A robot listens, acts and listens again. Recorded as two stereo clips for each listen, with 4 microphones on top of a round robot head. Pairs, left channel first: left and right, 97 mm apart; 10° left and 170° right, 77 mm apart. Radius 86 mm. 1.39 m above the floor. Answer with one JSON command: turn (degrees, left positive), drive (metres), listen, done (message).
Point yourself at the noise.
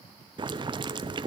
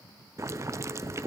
{"turn": -120}
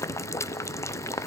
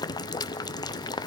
{"turn": 30}
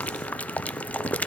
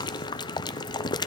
{"turn": 15}
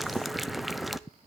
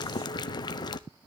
{"done": "Found it: boiling, straight ahead, under 1 m away."}